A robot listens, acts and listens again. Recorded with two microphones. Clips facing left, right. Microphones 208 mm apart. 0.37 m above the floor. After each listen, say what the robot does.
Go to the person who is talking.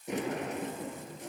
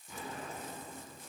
Keep listening.
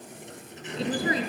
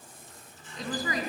Turn 30° left.
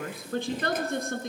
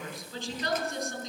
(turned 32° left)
Turn 115° left.
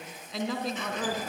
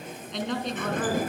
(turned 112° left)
Drive 1.0 m forward.
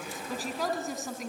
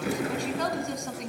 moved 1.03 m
Drive 1.0 m forward.
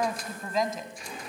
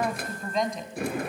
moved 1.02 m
Drive 1.0 m forward.
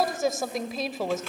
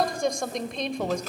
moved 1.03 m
Drive 1.0 m forward.
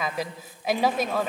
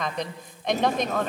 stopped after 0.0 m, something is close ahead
Turn 10° left.
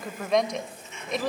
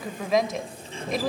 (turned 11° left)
Arrived at the woman speaking, straight ahead.